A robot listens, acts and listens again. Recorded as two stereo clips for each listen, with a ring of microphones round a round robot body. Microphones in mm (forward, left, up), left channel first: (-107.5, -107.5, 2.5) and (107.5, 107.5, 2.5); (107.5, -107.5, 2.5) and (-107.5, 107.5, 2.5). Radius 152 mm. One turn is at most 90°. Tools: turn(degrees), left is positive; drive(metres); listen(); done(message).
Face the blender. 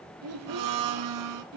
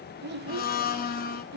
turn(degrees=15)
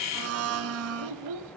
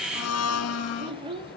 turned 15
done("Facing the blender, 1 to 2 m away.")